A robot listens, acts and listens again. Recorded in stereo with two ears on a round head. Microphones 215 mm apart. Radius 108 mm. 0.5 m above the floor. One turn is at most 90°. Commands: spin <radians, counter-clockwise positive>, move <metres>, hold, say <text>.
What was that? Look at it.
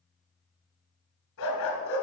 spin 0.96
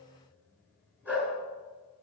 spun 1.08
say Found it: a dog barking, straight ahead, 2 to 4 m away.